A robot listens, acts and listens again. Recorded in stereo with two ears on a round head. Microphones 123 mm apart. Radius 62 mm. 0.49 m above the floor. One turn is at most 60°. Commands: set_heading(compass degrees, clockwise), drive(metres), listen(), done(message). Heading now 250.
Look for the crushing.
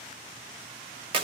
listen()
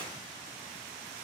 listen()
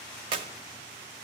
done("I can't make out crushing to turn to.")